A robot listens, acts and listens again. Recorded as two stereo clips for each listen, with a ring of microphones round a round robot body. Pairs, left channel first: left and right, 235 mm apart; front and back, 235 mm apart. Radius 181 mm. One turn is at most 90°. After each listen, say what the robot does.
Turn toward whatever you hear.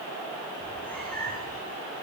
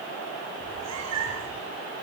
Turn 90° left.
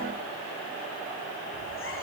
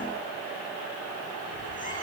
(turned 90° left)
Turn 85° left.
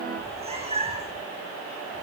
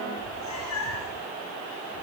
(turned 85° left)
Turn 25° right.
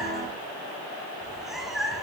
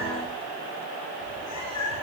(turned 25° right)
Facing the cat meowing.